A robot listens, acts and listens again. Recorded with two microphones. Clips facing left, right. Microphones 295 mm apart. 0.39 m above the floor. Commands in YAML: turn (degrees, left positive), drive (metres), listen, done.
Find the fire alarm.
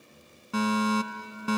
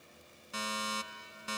turn: 70
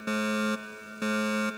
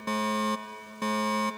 turn: 10
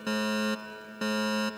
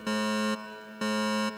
done: "Found it: a fire alarm, straight ahead."